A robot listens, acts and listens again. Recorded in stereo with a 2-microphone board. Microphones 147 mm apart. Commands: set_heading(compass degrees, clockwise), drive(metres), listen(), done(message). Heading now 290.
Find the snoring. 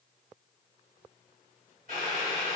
listen()
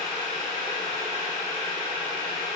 listen()
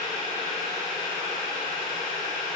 done("I can't make out snoring to turn to.")